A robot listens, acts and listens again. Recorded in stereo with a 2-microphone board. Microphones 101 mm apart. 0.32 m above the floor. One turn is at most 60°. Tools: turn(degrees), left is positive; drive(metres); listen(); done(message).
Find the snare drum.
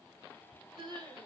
listen()
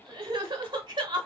listen()
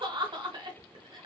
done("I can't make out a snare drum to turn to.")